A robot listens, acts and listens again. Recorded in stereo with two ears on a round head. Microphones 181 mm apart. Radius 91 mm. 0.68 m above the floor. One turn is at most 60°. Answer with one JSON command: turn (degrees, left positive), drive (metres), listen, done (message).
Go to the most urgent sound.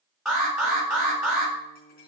{"turn": 30}
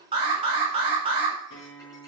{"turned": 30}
{"turn": -30}
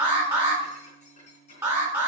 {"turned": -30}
{"turn": -10}
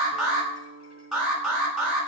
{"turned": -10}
{"drive": 1.0}
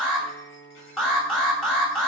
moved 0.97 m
{"drive": 1.0}
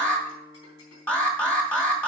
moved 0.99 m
{"turn": 10}
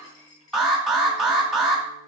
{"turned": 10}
{"drive": 1.0}
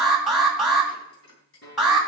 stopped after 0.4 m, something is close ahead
{"done": "I am next to the alarm."}